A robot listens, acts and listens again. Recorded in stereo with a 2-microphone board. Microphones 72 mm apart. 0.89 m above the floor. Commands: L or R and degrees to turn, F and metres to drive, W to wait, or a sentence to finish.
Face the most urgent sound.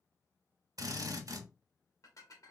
W
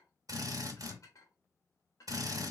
W
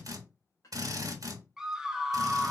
R30
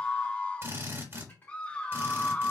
L20
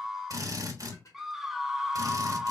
Facing the scream, under 1 m away.